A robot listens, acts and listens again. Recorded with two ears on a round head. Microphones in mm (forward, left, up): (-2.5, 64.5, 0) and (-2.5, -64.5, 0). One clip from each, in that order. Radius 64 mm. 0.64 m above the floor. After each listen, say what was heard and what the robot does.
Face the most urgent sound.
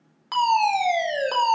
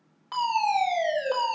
The fire alarm: about 50° left or 130° left. Turn 50° left.
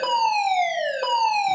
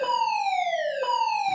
So it is at 65° left. Turn 65° left.
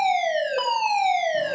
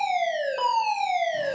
Found it: a fire alarm, straight ahead, 2 to 4 m away.